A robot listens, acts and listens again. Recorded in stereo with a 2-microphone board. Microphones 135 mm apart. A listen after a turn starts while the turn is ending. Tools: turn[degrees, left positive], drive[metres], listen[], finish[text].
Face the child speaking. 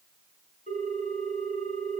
Action: listen[]
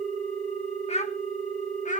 Thought: The child speaking: about 70° left or 110° left.
Action: turn[70]
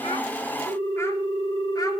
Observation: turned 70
Action: listen[]
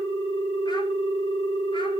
Action: listen[]
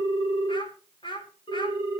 Thought: So it is at 35° left.
Action: turn[35]
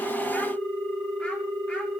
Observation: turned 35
Action: listen[]
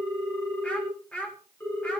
Thought: The child speaking is now 10° left.
Action: turn[10]
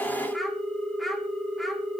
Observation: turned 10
Action: listen[]
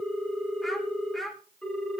Action: finish[Found it: a child speaking, straight ahead.]